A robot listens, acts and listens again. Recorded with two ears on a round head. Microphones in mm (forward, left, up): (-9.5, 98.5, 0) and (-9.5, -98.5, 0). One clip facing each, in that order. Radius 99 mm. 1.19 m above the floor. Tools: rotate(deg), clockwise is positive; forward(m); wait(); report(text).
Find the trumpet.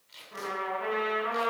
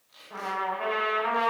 rotate(90)
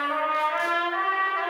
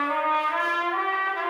rotate(-10)
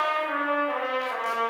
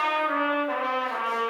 report("Facing the trumpet.")